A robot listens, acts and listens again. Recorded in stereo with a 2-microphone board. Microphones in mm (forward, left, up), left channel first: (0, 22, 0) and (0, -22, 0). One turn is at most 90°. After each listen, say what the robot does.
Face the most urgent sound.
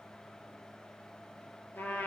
Keep listening.
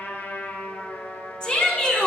Turn 20° left.
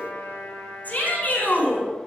Turn 90° left.
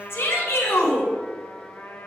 Turn 90° left.
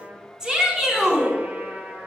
Turn 15° right.
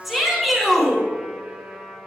Facing the shout.